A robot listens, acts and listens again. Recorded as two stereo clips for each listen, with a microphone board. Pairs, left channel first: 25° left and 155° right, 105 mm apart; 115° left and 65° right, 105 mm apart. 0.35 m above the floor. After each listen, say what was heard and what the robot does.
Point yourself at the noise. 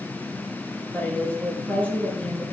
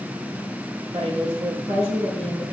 The woman speaking: 50° right. Turn 50° right.
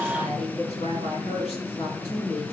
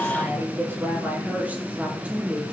The woman speaking is now 10° left. Turn 10° left.
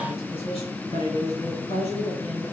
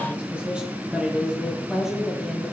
The woman speaking is now 20° left. Turn 20° left.
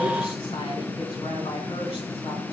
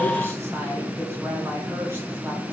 Keep listening.
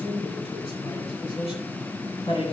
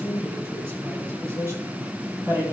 Facing the woman speaking, 2 to 4 m away.